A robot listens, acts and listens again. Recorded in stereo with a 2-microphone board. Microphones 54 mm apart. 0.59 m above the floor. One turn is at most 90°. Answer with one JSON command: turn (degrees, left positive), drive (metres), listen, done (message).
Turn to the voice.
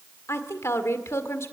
{"turn": 60}
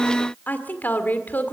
{"turn": 40}
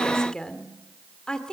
{"turn": 15}
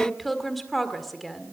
{"done": "Found it: a woman speaking, straight ahead."}